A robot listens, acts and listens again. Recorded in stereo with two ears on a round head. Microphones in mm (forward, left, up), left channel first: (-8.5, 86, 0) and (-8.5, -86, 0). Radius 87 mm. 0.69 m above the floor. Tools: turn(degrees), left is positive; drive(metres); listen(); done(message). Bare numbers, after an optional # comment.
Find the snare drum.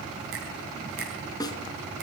# The snare drum: about 20° left or 160° left.
turn(20)
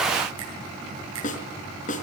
# So it is at 140° left.
turn(140)
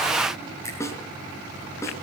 # The snare drum is now 15° left.
turn(15)
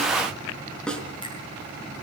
done("Facing the snare drum, 2 to 4 m away.")